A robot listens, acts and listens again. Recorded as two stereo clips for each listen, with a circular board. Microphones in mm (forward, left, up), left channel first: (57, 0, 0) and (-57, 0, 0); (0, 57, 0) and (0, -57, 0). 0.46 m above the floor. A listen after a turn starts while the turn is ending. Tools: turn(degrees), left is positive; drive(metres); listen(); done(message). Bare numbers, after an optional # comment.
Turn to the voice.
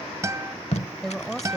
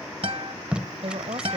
# The woman speaking: 90° right.
turn(-90)
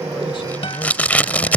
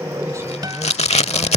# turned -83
listen()
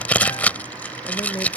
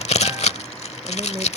# The woman speaking is now 45° right.
turn(-45)
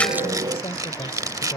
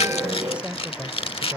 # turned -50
# The woman speaking is now 25° right.
turn(-25)
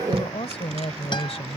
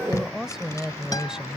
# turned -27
done("Facing the woman speaking.")